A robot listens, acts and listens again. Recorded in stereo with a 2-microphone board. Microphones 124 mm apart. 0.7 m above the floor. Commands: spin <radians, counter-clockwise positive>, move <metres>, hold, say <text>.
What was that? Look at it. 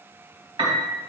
spin -0.70
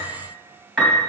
say Found it: a piano, straight ahead, 2 to 4 m away.